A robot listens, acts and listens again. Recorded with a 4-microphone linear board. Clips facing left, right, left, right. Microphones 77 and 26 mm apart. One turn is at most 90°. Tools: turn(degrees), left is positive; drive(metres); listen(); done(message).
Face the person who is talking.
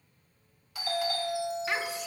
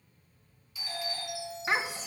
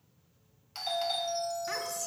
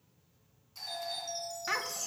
turn(degrees=-30)
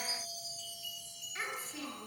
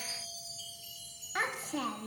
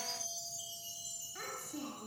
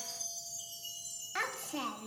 turn(degrees=-90)
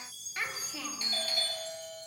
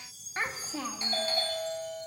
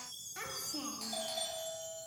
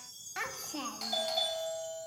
turn(degrees=-30)
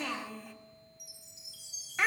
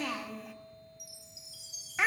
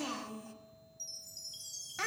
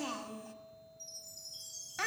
done("Facing the child speaking, 1 to 2 m away.")